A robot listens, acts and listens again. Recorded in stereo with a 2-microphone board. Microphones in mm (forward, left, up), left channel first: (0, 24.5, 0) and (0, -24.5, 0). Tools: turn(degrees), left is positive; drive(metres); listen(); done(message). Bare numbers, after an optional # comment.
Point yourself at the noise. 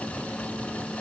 listen()
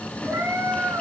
turn(-90)
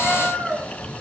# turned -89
done("Found it: a cat meowing, straight ahead, 2 to 4 m away.")